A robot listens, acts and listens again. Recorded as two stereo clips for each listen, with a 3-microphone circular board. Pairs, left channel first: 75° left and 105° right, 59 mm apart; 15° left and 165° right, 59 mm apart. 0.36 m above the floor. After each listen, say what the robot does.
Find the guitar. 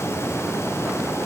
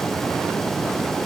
Keep listening.
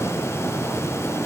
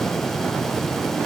Keep listening.
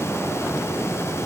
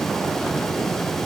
I can't make out a guitar.